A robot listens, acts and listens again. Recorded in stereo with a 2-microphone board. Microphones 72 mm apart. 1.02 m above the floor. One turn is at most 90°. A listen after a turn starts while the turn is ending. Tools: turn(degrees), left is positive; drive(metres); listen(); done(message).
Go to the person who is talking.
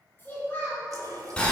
turn(degrees=30)
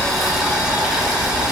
listen()
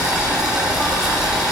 listen()
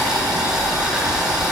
done("I heard a child speaking, but can't make it out now. It was about straight ahead or 120° left. I did not reach it.")